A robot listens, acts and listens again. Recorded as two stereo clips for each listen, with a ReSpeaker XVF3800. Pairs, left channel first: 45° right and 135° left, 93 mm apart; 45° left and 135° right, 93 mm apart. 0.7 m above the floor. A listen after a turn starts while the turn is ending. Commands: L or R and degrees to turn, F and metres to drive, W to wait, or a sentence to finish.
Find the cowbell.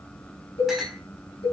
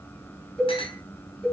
R40
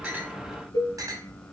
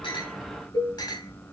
Facing the cowbell, 2 to 4 m away.